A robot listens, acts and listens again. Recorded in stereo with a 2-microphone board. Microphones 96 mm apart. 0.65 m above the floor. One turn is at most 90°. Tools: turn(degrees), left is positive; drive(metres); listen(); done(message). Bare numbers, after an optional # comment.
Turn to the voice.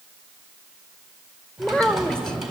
turn(30)
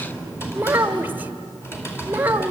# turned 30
# So it is at 20° right.
turn(-20)
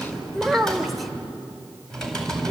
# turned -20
done("Facing the child speaking.")